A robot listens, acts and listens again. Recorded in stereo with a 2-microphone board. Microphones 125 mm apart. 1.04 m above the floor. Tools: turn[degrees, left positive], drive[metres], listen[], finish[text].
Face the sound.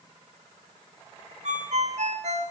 Thought: The ringtone: about 70° right or 110° right.
Action: turn[-70]
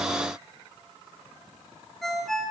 Action: finish[Facing the ringtone.]